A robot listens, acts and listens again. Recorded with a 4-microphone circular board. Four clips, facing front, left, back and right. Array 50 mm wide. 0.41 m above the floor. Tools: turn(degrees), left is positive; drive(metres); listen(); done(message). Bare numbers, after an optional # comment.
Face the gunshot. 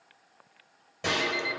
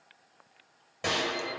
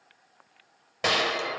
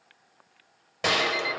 # The gunshot: 150° right.
turn(-150)
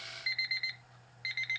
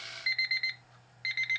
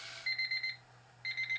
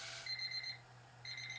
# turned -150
done("I heard a gunshot from this way, but can't make it out now.")